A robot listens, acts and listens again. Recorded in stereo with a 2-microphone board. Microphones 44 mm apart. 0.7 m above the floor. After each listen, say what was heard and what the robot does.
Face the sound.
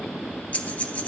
The breathing: about 35° left or 145° left. Turn 35° left.
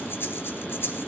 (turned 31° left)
So it is at 110° left. Turn 110° left.
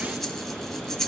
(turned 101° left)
The breathing is now 10° left. Turn 10° left.
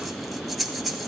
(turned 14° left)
Found it: breathing, straight ahead.